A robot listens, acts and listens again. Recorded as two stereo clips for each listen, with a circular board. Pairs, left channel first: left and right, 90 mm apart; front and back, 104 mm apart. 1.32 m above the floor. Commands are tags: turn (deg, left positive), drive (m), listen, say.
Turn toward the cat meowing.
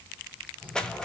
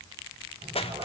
<turn deg="165"/>
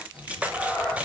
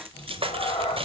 <turn deg="10"/>
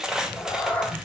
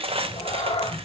<turn deg="15"/>
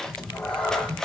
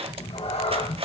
<turn deg="15"/>
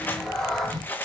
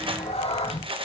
<say>Found it: a cat meowing, straight ahead, 1 to 2 m away.</say>